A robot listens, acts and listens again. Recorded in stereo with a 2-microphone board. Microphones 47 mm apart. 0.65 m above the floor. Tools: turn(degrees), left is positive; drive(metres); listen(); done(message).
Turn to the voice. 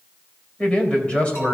turn(degrees=30)
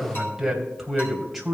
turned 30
done("Facing the man speaking.")